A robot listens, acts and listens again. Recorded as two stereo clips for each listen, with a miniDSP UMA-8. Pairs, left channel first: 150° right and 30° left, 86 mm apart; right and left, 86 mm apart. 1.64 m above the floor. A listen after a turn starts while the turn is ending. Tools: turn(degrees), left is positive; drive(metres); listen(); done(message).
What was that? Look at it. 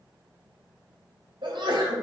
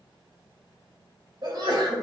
turn(degrees=60)
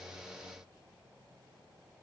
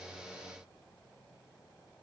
done("I heard a sneeze from this way, but can't make it out now.")